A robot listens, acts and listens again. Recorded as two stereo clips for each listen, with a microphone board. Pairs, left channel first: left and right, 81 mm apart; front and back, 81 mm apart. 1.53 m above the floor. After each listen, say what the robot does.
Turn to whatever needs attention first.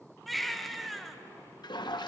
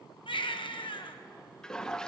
Facing the baby crying, 1 to 2 m away.